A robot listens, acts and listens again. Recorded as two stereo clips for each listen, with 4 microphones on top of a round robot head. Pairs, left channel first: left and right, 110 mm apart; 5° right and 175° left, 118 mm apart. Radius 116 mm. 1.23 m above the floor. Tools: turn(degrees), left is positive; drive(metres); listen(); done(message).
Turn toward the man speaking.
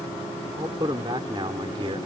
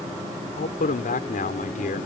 turn(degrees=-35)
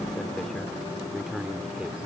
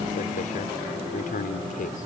done("Facing the man speaking.")